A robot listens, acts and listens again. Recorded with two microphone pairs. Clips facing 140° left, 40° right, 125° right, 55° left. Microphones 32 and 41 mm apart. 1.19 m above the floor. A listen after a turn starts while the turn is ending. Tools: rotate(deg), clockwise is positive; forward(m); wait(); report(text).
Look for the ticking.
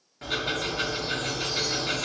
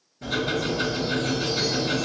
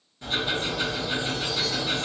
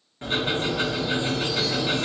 rotate(-110)
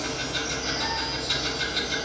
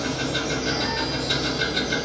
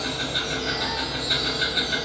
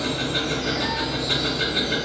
rotate(-55)
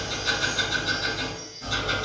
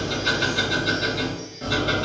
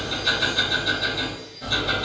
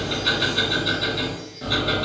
report("Facing the ticking, 1 to 2 m away.")